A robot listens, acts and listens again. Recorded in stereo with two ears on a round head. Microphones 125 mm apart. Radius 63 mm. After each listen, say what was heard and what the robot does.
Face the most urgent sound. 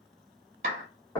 Keep listening.
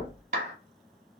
Keep listening.
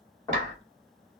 I can't make out anything urgent to turn to.